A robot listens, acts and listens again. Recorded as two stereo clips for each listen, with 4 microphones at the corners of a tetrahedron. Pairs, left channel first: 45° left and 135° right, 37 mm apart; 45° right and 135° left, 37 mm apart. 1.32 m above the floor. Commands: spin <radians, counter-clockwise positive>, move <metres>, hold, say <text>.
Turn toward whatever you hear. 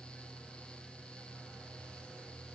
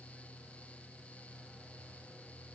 hold
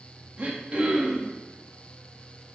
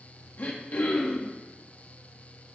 spin -1.40
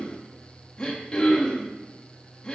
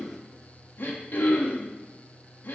spin -0.35
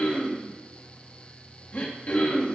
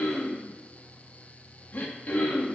say Facing the throat clearing, 1 to 2 m away.